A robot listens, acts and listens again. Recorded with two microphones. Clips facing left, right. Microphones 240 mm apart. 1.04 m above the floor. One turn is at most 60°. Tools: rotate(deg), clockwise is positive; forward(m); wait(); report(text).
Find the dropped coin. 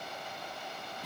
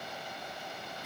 wait()
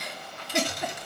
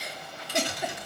rotate(-50)
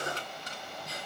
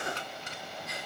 wait()
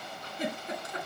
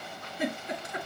report("I heard a dropped coin, but can't make it out now. It was about straight ahead or 80° left.")